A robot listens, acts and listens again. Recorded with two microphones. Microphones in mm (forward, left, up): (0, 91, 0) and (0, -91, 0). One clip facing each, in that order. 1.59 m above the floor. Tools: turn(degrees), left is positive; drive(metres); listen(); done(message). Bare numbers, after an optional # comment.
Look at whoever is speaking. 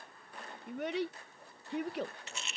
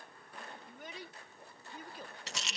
# The child speaking: about 70° left or 110° left.
turn(70)
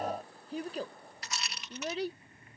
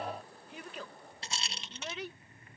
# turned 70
# So it is at 35° left.
turn(35)
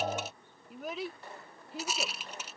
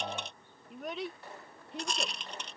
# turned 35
done("Facing the child speaking.")